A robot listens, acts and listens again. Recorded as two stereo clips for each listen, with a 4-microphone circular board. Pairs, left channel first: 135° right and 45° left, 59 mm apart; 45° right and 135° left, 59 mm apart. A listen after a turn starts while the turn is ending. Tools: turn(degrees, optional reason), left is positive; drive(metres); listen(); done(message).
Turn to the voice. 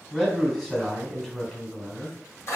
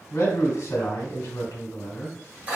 turn(degrees=-55, reason="The man speaking: 55° right.")
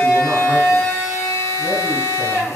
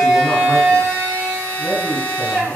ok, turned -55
listen()
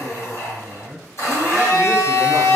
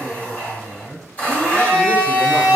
done("Facing the man speaking.")